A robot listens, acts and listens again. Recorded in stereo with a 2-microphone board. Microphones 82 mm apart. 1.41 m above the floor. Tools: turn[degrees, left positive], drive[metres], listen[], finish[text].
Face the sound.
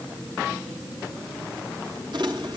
Thought: The crumpling: about 65° right or 115° right.
Action: turn[-65]
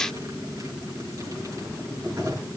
Thought: So it is at 50° right.
Action: turn[-50]
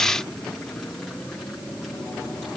Action: listen[]
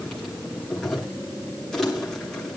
Action: finish[Facing the crumpling.]